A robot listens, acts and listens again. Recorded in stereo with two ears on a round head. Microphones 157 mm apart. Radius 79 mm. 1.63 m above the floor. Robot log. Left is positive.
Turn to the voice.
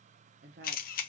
note: The woman speaking: about 60° right or 120° right.
cmd yaw -60
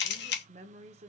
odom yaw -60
note: So it is at 45° right.
cmd yaw -45
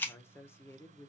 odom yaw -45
note: The woman speaking is now 15° left.
cmd yaw +15
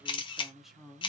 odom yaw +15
end: Facing the woman speaking.